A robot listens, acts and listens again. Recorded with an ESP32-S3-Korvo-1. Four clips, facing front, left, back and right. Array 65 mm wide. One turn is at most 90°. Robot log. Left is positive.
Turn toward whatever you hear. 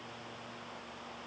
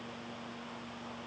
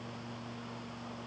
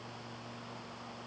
cmd idle
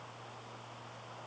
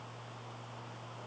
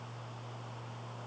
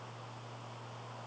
cmd idle
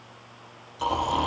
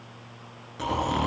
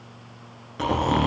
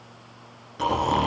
note: The snoring: 175° right.
cmd yaw -90
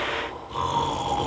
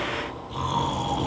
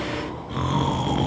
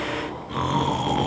note: The snoring is now 120° right.
cmd yaw -90
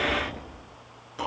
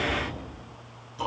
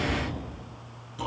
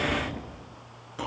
note: The snoring is now 40° right.
cmd yaw -40
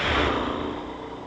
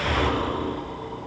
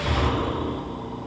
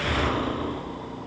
end: Found it: snoring, straight ahead, over 4 m away.